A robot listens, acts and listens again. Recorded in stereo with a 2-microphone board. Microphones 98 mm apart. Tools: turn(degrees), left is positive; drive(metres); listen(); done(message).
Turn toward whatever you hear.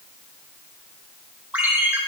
turn(degrees=-30)
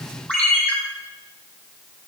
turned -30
turn(degrees=20)
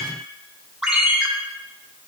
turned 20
done("Facing the ringtone, 2 to 4 m away.")